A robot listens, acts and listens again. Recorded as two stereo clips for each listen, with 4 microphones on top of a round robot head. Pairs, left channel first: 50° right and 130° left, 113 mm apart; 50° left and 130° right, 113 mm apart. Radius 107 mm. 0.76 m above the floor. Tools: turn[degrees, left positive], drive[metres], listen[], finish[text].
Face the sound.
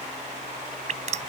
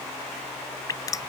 Thought: The dripping: 110° left.
Action: turn[110]
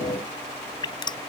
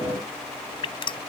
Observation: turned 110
Action: finish[Facing the dripping.]